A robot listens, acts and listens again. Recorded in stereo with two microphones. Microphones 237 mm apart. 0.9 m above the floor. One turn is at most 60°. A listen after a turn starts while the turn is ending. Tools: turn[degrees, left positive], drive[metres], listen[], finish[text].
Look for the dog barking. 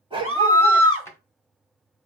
Thought: The dog barking: about 20° right or 160° right.
Action: turn[-20]
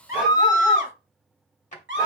Action: listen[]
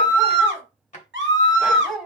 Action: finish[Facing the dog barking.]